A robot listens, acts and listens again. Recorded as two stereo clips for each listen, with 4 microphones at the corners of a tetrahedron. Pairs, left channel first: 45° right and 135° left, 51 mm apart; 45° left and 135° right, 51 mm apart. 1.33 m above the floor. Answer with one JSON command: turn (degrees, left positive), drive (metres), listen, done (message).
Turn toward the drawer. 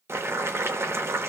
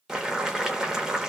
{"listen": true}
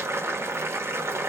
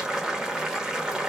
{"listen": true}
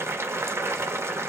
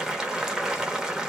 {"done": "I can't make out a drawer, only boiling."}